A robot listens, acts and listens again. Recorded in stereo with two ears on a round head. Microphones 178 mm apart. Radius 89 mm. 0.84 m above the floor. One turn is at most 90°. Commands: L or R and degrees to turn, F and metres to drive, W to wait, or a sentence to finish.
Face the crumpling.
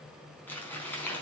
L30
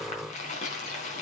L90
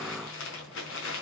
L70
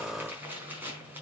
R10
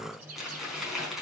Found it: crumpling, straight ahead.